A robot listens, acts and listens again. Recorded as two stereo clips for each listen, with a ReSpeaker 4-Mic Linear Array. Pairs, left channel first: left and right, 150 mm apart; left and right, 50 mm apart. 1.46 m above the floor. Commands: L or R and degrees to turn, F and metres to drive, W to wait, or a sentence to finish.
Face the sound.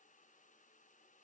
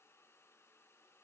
W
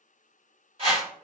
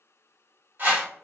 R40
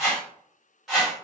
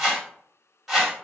Found it: a whoosh, straight ahead.